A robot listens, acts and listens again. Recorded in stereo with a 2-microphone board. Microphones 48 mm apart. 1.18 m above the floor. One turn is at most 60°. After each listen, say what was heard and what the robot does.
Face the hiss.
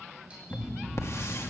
Turn 60° left.
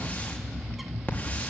So it is at 30° left. Turn 30° left.
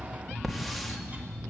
Found it: a hiss, straight ahead, 2 to 4 m away.